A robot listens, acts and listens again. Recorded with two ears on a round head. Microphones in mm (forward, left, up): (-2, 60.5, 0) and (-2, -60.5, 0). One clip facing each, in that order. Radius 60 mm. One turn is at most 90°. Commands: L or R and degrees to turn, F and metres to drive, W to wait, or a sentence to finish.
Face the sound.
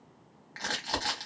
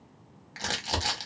R30
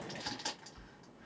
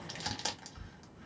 R90
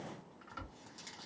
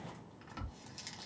R25
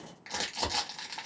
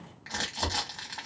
L15
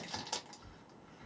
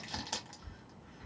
Found it: crumpling, straight ahead, 1 to 2 m away.